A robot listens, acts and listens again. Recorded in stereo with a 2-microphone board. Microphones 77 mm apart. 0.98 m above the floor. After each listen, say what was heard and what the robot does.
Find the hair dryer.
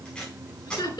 Keep listening.
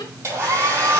The hair dryer: about 35° right or 145° right. Turn 35° right.
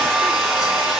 Facing the hair dryer, over 4 m away.